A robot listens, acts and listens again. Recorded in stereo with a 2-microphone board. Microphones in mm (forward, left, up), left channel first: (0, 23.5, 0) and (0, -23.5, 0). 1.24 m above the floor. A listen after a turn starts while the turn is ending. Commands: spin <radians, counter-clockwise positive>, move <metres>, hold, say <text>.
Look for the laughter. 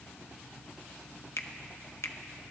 hold
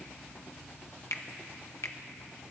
hold
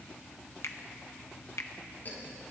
spin 0.70
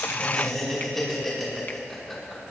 say Found it: laughter, straight ahead, over 4 m away.